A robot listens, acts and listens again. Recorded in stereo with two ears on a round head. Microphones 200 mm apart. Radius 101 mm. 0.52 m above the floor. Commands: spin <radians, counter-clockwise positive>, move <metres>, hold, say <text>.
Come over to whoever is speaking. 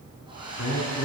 spin 1.05
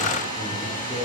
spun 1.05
move 1.0
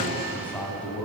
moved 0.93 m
move 1.0
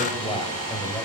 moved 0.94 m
spin 0.26
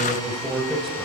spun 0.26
move 1.0
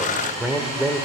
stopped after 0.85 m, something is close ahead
say I am next to the man speaking.